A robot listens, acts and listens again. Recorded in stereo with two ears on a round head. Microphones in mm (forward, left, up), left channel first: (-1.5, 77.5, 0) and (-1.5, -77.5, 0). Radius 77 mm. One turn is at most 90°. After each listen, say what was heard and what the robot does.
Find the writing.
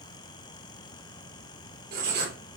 The writing: about 55° right or 125° right. Turn 55° right.
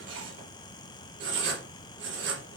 So it is at 70° right. Turn 70° right.
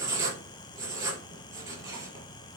The writing is now 20° right. Turn 20° right.
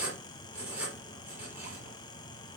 The writing is now 10° right. Turn 10° right.
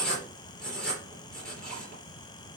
Found it: writing, straight ahead, over 4 m away.